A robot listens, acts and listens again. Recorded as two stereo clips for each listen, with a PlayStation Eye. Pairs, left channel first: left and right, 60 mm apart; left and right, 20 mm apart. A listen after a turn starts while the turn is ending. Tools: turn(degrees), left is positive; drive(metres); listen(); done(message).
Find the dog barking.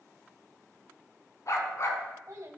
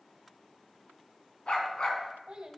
turn(degrees=50)
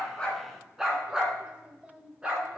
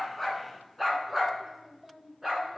turn(degrees=-15)
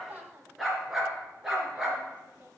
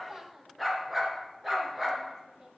done("Found it: a dog barking, straight ahead, 2 to 4 m away.")